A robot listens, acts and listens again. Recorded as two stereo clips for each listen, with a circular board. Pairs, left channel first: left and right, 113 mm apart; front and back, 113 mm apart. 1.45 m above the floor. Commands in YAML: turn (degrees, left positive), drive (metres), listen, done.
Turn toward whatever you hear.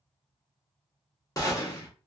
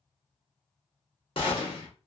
turn: 35
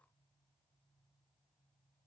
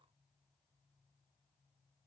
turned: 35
done: "I heard a gunshot from this way, but can't make it out now."